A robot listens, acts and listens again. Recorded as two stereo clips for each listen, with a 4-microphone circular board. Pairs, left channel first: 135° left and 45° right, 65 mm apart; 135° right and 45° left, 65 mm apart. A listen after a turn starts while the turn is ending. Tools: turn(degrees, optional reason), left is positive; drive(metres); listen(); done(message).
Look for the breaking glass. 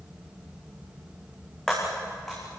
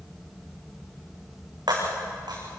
turn(degrees=50, reason="The breaking glass: 50° left.")
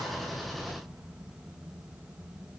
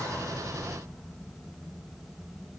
done("Facing where the breaking glass came from. I can't hear it now.")